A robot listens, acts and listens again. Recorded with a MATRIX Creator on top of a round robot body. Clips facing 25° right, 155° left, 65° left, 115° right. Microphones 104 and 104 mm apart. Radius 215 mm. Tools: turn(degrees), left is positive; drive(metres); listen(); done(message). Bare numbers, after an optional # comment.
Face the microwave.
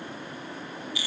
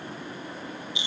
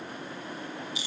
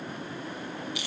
listen()
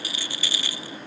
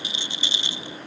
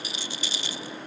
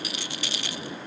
listen()
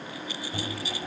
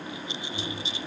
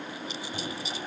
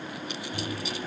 done("Facing the microwave.")